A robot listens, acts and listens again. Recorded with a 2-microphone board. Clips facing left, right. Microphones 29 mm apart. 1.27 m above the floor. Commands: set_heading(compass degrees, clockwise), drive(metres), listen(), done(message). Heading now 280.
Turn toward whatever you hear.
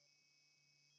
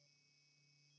listen()
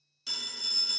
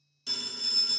set_heading(250)
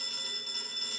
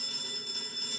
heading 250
set_heading(110)
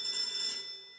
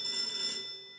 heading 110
set_heading(130)
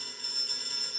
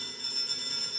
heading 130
done("Facing the phone ringing, 1 to 2 m away.")